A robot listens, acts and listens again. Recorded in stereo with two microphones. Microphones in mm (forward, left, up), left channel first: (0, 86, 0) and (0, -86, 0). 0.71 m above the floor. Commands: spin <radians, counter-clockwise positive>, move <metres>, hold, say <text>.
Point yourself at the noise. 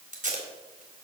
spin -0.87
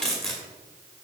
say Facing the tape being pulled, 2 to 4 m away.